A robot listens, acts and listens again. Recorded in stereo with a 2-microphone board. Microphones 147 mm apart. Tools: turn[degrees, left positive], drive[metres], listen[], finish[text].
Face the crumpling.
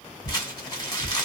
Thought: The crumpling: about 30° left or 150° left.
Action: turn[30]
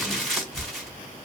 Action: finish[Found it: crumpling, straight ahead.]